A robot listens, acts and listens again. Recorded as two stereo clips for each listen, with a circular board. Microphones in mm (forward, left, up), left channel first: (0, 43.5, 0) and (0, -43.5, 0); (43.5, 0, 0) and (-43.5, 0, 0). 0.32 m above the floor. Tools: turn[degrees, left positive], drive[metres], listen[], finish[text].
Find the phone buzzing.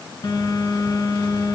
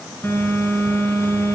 Thought: The phone buzzing: 60° left.
Action: turn[60]
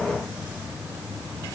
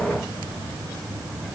Thought: The phone buzzing is now 15° right.
Action: turn[-15]
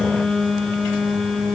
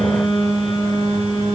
Action: finish[Facing the phone buzzing, 2 to 4 m away.]